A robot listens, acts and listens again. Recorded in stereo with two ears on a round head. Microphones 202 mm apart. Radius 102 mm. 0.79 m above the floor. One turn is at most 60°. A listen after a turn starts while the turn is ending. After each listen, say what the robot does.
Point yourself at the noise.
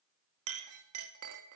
Turn 60° right.
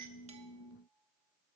Keep listening.
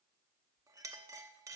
Turn 15° right.
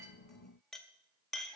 Facing the clink.